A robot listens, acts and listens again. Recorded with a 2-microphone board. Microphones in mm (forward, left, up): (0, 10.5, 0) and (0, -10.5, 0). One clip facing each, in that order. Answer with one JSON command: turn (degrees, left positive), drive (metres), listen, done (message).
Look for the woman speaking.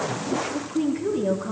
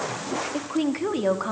{"turn": -65}
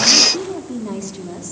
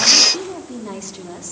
{"turn": -10}
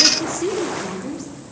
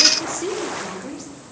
{"done": "Facing the woman speaking."}